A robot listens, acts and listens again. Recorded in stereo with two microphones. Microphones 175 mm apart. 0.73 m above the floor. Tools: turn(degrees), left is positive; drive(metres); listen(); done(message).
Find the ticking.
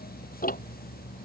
turn(degrees=50)
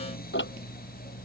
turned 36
turn(degrees=95)
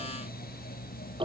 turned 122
turn(degrees=-30)
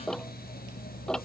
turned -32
done("Found it: ticking, straight ahead.")